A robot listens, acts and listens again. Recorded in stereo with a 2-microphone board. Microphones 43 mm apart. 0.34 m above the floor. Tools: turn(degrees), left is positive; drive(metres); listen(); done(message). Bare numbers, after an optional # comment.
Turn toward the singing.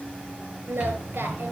turn(-90)
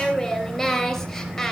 done("Facing the singing, 2 to 4 m away.")